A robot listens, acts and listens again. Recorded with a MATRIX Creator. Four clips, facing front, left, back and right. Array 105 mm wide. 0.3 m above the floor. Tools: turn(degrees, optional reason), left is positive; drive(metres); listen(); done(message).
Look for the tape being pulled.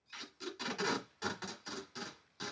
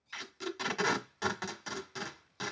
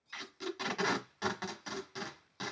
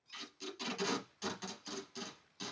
turn(degrees=120, reason="The tape being pulled: 120° left.")
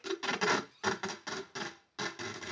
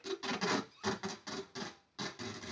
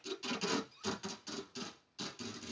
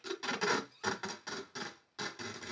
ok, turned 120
done("Facing the tape being pulled, 1 to 2 m away.")